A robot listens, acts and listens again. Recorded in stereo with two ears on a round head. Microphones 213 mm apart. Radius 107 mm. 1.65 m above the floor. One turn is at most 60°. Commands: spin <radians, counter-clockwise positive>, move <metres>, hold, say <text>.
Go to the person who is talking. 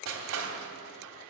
hold
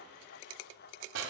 hold
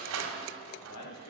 spin 1.05
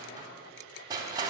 spin 0.52
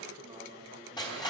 spin -0.26
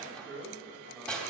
move 1.0
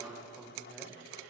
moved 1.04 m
move 1.0
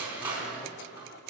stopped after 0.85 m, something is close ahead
hold
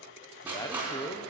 spin 0.26
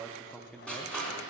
say I am next to the man speaking.